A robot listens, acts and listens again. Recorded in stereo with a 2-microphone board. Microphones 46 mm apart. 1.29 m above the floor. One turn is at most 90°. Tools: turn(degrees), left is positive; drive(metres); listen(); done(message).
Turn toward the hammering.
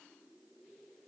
listen()
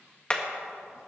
turn(degrees=20)
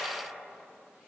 listen()
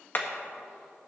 turn(degrees=90)
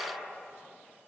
turn(degrees=50)
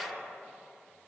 listen()
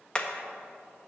turn(degrees=25)
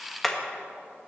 done("Found it: hammering, straight ahead.")